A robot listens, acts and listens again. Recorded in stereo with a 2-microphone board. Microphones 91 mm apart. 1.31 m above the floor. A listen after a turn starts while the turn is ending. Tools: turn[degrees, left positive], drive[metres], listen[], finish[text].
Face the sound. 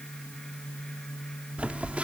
Action: turn[-30]
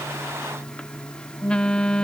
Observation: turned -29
Thought: So it is at 10° left.
Action: turn[10]
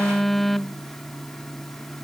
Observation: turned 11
Action: finish[Facing the phone buzzing.]